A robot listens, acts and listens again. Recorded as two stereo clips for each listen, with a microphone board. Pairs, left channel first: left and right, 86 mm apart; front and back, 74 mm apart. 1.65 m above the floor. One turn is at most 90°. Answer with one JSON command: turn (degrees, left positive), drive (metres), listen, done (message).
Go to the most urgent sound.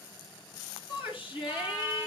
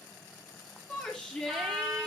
{"turn": 75}
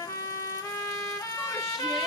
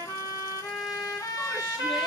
{"listen": true}
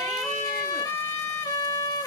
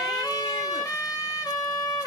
{"listen": true}
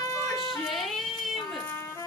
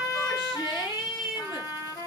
{"drive": 1.0}
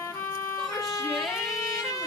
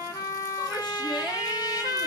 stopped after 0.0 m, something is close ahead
{"listen": true}
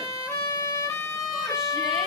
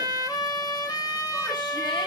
{"listen": true}
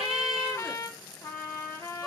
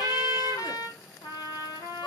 {"done": "I heard a shout from this way, but can't make it out now. I did not reach it."}